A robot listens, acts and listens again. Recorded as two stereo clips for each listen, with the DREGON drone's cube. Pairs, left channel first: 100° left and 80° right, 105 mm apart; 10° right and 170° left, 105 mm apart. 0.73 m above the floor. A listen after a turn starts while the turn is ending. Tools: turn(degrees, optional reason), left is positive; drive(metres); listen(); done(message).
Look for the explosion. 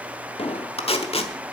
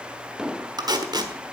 turn(degrees=85, reason="The explosion: 85° left.")
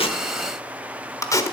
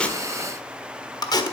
done("Facing where the explosion came from. I can't hear it now.")